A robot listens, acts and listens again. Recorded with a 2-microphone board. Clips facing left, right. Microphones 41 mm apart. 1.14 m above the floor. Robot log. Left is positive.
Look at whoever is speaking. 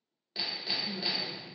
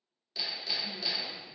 cmd yaw +90
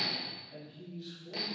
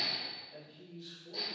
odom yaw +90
end: Found it: a man speaking, straight ahead.